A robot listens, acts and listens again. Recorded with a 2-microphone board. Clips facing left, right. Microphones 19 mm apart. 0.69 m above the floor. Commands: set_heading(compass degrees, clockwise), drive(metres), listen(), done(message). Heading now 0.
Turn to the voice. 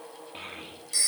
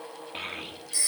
set_heading(30)
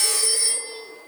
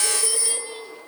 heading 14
listen()
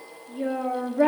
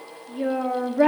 set_heading(34)
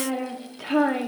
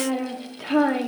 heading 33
done("Facing the child speaking, 1 to 2 m away.")